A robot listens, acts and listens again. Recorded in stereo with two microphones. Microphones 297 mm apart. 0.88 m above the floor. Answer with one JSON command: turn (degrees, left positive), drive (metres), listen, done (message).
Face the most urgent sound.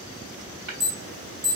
{"turn": -50}
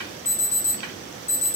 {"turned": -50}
{"turn": -10}
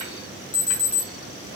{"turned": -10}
{"done": "Found it: an alarm, straight ahead."}